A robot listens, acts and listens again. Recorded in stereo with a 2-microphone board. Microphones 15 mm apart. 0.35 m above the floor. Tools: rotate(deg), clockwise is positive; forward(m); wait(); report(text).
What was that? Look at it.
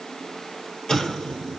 rotate(-60)
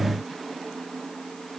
wait()
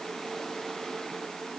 report("I heard an explosion, but can't make it out now. It was about straight ahead or 60° left.")